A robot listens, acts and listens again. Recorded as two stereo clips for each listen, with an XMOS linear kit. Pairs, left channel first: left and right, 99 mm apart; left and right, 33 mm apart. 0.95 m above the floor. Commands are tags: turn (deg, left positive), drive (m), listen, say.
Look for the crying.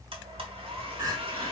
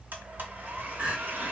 <turn deg="-35"/>
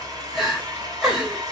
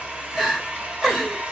<say>Facing the crying.</say>